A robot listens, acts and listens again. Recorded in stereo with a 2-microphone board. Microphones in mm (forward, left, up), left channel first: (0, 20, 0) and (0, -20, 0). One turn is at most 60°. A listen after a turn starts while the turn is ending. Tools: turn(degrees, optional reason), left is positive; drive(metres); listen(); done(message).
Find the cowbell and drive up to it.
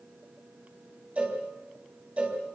turn(degrees=-35, reason="The cowbell: about 35° right or 145° right.")
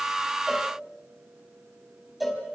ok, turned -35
drive(metres=1.0)
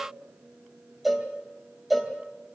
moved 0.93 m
drive(metres=1.0)
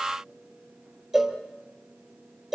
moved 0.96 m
turn(degrees=-10, reason="The cowbell is now 10° right.")
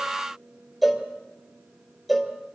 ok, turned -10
drive(metres=1.0)
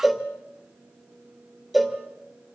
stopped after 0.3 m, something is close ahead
done("Arrived at the cowbell, straight ahead.")